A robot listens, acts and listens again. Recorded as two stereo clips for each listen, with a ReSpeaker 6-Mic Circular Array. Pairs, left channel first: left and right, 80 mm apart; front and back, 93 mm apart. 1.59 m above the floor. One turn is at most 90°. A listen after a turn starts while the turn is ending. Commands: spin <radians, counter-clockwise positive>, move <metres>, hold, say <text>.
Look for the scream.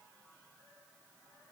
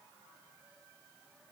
hold
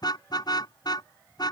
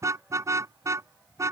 hold
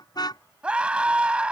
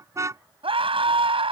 spin -1.57
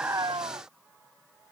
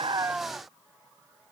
spin -1.31
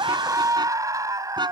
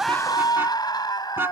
spin -0.79
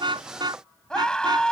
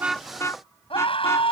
spin 0.17
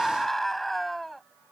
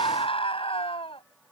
say Found it: a scream, straight ahead.